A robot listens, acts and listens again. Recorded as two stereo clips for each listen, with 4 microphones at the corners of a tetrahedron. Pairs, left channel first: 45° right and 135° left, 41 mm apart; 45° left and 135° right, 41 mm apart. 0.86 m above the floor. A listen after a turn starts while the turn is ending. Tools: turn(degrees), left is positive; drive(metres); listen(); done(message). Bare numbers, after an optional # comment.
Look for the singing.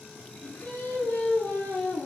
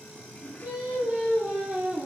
# The singing: 80° right.
turn(-80)
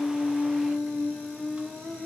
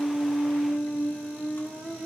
done("Found it: singing, straight ahead.")